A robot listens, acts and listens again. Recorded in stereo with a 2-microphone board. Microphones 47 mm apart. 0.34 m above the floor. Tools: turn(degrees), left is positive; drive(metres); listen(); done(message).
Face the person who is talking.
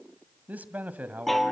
turn(degrees=-35)
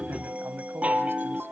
turn(degrees=-105)
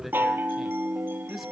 done("Facing the man speaking.")